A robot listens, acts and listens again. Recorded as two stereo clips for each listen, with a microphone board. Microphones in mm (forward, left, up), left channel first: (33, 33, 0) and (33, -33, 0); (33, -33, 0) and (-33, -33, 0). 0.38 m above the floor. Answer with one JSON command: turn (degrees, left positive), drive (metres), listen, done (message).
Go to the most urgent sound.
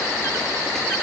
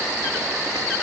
{"listen": true}
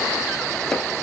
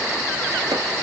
{"listen": true}
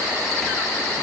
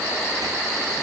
{"done": "I can't make out anything urgent."}